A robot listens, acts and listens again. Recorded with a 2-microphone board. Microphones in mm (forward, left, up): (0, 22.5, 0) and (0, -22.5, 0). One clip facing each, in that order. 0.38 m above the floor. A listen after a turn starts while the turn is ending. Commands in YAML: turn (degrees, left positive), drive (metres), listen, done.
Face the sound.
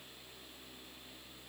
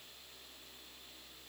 listen: true
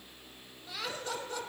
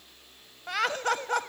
turn: -60
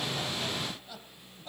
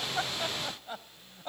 turn: -40
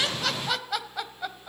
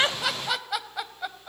done: "Found it: laughter, straight ahead, 1 to 2 m away."